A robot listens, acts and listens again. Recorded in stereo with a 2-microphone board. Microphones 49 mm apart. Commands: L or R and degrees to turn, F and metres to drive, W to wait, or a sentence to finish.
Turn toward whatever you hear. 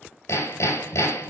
L90
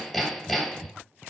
Facing the hammering, 2 to 4 m away.